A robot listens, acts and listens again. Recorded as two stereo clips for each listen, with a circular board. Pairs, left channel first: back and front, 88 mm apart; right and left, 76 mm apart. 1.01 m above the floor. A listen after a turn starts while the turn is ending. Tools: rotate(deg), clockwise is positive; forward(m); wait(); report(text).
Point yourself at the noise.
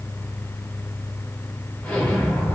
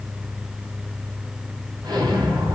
rotate(-105)
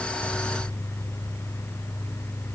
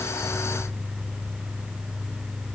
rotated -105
report("I heard an explosion from this way, but can't make it out now.")